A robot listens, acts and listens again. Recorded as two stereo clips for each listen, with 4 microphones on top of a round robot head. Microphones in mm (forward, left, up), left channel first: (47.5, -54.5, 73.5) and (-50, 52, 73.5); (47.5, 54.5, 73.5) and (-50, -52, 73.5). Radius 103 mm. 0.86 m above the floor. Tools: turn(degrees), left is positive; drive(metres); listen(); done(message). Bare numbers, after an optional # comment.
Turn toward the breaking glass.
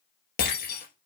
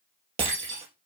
# The breaking glass: 75° right.
turn(-75)
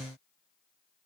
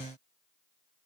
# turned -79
done("Facing where the breaking glass came from. I can't hear it now.")